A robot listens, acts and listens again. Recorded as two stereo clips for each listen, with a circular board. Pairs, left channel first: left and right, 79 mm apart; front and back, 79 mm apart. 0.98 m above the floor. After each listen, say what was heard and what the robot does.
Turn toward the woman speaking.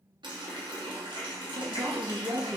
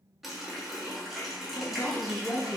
The woman speaking: 45° right. Turn 45° right.
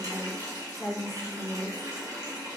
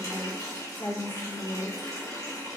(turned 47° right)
Facing the woman speaking.